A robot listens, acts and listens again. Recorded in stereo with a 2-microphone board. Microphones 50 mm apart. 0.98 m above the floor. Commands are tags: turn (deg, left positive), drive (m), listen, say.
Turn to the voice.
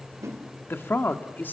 <turn deg="45"/>
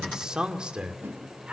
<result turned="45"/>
<turn deg="-20"/>
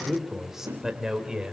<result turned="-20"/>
<turn deg="-10"/>
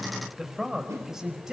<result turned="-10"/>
<say>Found it: a man speaking, straight ahead.</say>